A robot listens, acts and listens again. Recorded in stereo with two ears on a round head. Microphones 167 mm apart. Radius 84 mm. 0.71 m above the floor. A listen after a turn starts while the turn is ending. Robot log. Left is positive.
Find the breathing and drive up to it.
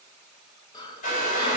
note: The breathing: about 20° left or 160° left.
cmd yaw +20
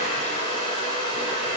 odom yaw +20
cmd idle
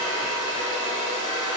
cmd idle
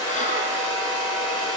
end: I heard breathing, but can't make it out now. It was about straight ahead or 140° left. I did not reach it.